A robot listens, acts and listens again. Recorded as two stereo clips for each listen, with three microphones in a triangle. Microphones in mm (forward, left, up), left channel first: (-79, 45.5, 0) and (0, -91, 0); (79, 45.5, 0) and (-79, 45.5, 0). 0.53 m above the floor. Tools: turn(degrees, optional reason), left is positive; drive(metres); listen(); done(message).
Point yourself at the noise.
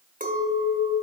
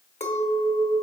turn(degrees=-40, reason="The clink: 40° right.")
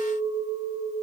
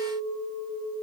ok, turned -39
done("Found it: a clink, straight ahead.")